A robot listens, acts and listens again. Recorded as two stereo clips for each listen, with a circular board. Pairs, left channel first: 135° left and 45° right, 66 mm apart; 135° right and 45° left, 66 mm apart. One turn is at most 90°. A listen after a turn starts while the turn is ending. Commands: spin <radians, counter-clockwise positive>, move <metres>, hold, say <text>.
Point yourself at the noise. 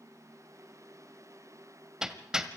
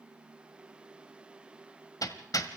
spin -1.57
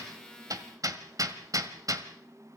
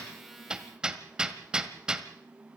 spin -0.52
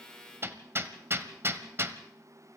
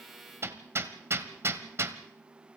say Facing the hammering.